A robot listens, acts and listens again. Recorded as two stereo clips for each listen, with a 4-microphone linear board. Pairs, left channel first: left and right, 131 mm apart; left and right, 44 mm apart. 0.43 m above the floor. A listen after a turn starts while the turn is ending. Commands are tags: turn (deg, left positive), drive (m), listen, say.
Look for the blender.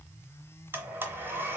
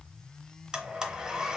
<turn deg="-15"/>
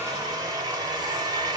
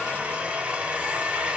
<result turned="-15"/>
<turn deg="-150"/>
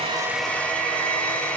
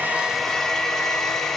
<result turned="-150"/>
<turn deg="10"/>
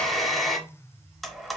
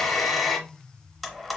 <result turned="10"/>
<say>Found it: a blender, straight ahead.</say>